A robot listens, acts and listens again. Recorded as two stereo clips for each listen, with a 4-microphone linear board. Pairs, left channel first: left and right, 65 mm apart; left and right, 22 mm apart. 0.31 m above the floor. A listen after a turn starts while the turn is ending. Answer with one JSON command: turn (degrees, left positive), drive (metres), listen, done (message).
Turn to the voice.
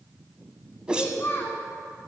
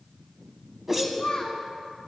{"turn": 40}
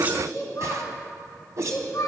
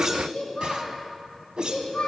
{"turn": 95}
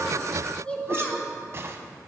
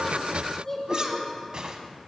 {"turn": 20}
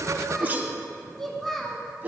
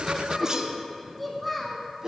{"done": "Found it: a child speaking, straight ahead."}